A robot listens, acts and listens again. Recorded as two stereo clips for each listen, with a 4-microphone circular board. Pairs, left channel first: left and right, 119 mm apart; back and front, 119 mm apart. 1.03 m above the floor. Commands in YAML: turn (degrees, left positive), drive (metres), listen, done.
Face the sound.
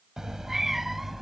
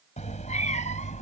turn: 180
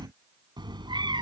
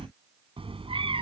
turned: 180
turn: -40
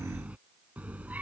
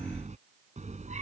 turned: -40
turn: -15
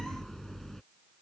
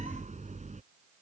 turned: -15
done: "Facing the cat meowing."